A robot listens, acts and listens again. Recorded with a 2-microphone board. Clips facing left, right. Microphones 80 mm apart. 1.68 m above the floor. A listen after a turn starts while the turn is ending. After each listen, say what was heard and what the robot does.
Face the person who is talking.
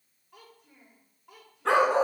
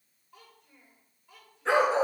Turn 90° left.
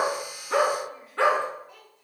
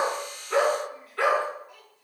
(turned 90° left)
Found it: a child speaking, straight ahead, over 4 m away.